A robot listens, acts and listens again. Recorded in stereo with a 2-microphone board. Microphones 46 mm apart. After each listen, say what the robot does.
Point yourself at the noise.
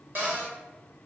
Turn 50° right.
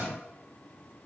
Keep listening.
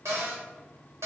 Turn 80° right.
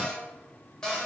Turn 15° left.
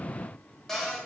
Turn 10° left.
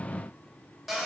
Facing the cupboard door, 1 to 2 m away.